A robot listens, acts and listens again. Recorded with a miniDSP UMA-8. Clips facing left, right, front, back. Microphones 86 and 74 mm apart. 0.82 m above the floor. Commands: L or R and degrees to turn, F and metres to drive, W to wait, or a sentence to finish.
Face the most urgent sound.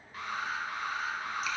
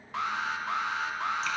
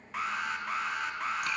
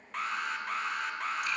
R85
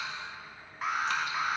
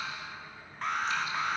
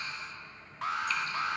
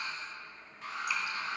Found it: an alarm, straight ahead, 1 to 2 m away.